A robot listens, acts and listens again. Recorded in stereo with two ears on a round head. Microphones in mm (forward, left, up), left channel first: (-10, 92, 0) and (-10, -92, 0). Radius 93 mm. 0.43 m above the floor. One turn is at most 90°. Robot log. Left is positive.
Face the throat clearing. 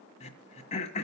note: The throat clearing: about 35° left or 145° left.
cmd yaw +35
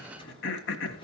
note: So it is at 110° left.
cmd yaw +90
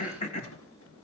note: The throat clearing is now 35° left.
cmd yaw +35
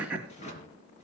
end: Facing the throat clearing.